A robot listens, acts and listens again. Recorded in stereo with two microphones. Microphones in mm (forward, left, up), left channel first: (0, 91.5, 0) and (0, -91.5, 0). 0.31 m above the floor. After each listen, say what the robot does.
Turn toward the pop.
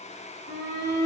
Keep listening.
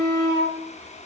Keep listening.
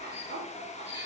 I can't make out a pop to turn to.